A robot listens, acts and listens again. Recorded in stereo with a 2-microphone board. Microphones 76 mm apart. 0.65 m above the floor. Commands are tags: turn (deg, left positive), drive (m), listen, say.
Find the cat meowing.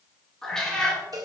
<turn deg="30"/>
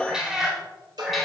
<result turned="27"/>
<turn deg="30"/>
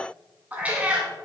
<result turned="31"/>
<turn deg="-15"/>
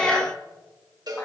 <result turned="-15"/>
<turn deg="10"/>
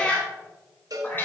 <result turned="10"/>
<turn deg="25"/>
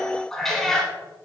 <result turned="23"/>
<say>Facing the cat meowing, 1 to 2 m away.</say>